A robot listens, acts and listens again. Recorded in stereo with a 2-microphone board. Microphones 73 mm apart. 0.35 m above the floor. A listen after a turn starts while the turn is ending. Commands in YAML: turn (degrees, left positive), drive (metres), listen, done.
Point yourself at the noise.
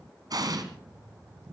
turn: -60
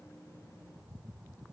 listen: true
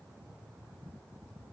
done: "I heard an explosion, but can't make it out now. It was about straight ahead or 60° right."